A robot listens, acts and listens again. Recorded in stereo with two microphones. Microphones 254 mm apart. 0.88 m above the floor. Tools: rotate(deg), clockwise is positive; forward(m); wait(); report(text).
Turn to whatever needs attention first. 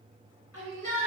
rotate(-75)
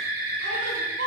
rotate(-30)
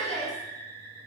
rotate(-15)
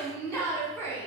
report("Facing the shout, 2 to 4 m away.")